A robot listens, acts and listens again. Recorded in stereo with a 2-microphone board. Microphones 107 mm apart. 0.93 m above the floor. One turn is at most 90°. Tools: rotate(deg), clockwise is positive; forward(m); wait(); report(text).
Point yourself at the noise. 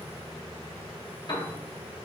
rotate(-45)
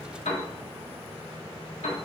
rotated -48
rotate(-85)
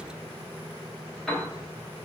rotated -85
report("Found it: a piano, straight ahead, 1 to 2 m away.")